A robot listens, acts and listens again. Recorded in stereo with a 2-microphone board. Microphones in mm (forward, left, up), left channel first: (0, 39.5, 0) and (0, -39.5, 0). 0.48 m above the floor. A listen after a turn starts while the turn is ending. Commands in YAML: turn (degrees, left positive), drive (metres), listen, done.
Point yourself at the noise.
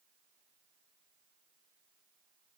listen: true
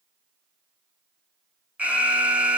turn: -15
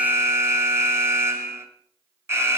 turn: -145
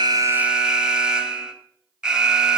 turn: -10
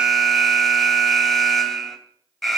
done: "Facing the alarm."